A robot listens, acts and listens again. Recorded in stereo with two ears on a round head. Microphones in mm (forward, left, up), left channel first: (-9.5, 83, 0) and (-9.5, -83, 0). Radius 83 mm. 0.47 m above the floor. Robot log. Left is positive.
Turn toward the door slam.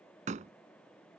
note: The door slam: about 40° right or 140° right.
cmd yaw -40
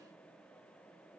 cmd idle
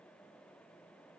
end: I heard a door slam, but can't make it out now. It was about straight ahead or 100° right.